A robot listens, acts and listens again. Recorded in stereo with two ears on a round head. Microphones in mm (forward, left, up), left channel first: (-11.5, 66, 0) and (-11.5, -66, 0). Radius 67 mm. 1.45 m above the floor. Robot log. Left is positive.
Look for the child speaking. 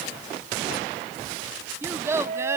note: The child speaking: about 20° right or 160° right.
cmd yaw -20
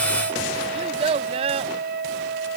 note: So it is at 135° right.
cmd yaw -135
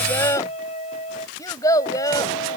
note: The child speaking is now 25° left.
cmd yaw +25
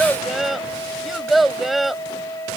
end: Facing the child speaking.